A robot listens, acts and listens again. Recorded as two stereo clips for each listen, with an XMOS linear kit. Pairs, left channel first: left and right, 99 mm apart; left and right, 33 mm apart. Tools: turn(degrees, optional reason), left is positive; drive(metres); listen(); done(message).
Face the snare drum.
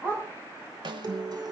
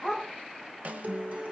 turn(degrees=-50, reason="The snare drum: about 50° right or 130° right.")
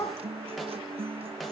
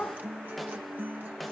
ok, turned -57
listen()
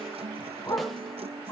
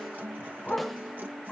listen()
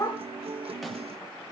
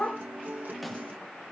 done("I heard a snare drum, but can't make it out now. It was about 10° left or 75° right.")